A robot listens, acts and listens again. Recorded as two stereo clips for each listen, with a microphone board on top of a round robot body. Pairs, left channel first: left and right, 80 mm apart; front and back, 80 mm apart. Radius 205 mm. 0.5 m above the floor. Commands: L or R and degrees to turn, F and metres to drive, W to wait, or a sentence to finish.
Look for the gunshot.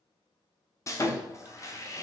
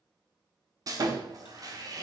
W
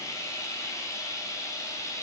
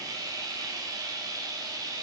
W
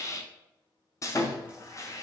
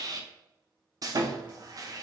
I can't make out a gunshot to turn to.